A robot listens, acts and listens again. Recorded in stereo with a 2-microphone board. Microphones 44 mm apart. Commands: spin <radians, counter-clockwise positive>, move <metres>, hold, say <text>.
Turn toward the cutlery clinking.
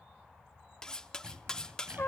spin 0.35
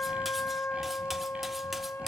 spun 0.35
hold
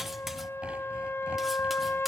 hold
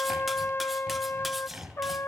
say I heard cutlery clinking, but can't make it out now. It was about straight ahead or 140° left.